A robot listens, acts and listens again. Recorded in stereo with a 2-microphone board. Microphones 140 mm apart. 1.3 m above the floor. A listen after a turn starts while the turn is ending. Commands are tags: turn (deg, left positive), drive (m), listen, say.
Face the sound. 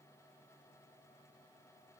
<listen/>
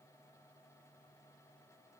<listen/>
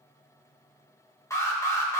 <turn deg="20"/>
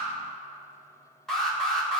<say>Found it: an alarm, straight ahead, 1 to 2 m away.</say>